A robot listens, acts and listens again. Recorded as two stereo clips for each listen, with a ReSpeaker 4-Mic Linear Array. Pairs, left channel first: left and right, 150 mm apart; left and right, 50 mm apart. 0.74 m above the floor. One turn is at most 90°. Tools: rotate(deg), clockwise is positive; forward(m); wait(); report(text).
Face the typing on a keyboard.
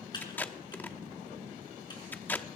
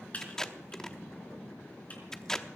rotate(-30)
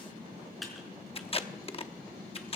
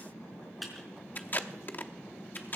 report("Found it: typing on a keyboard, straight ahead, 2 to 4 m away.")